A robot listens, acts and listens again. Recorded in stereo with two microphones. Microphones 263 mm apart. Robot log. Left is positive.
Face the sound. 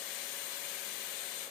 cmd idle
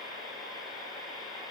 cmd idle
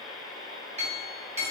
note: The clink: about 25° right or 155° right.
cmd yaw -25
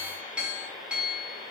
end: Facing the clink.